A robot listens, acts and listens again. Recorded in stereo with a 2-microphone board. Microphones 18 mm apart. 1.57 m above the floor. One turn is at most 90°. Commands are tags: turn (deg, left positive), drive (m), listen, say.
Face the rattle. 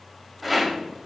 <turn deg="30"/>
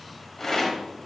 <turn deg="90"/>
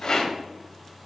<turn deg="50"/>
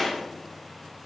<turn deg="15"/>
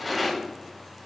<say>Facing the rattle, 1 to 2 m away.</say>